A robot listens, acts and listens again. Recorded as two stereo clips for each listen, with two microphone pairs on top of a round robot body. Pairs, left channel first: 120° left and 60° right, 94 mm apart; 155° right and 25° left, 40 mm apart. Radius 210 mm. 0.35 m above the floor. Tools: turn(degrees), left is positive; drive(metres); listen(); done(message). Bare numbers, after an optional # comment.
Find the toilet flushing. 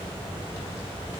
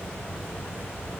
listen()
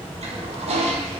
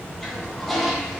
# The toilet flushing: 75° right.
turn(-75)
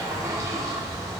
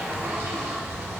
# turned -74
done("Facing the toilet flushing, 1 to 2 m away.")